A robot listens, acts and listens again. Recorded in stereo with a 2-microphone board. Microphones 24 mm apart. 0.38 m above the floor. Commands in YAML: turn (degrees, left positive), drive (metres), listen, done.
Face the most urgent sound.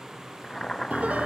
listen: true
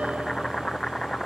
listen: true
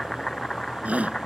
turn: -60
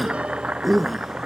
done: "Facing the shout."